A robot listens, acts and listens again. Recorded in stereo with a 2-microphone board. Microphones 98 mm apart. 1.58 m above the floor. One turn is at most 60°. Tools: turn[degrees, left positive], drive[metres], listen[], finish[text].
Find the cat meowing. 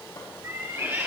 Thought: The cat meowing: about 25° right or 155° right.
Action: turn[-25]
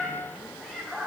Action: finish[Facing the cat meowing.]